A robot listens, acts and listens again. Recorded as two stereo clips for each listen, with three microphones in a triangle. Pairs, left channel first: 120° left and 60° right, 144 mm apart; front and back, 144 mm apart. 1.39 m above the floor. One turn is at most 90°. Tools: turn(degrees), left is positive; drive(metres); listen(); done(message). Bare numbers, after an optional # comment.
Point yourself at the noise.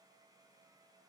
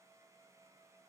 listen()
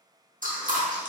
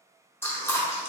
# The chewing: 75° right.
turn(-75)
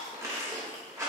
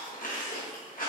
# The chewing is now 10° left.
turn(10)
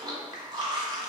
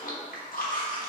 done("Found it: chewing, straight ahead, under 1 m away.")